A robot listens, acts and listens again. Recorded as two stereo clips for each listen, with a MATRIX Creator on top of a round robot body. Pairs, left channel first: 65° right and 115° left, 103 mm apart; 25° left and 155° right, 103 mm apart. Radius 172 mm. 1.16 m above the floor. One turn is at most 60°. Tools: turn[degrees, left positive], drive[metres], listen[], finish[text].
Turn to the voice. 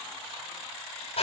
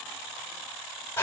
Action: listen[]
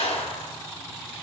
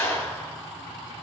Action: listen[]
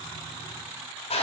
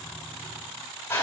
Action: finish[I can't make out anyone speaking, only a clap.]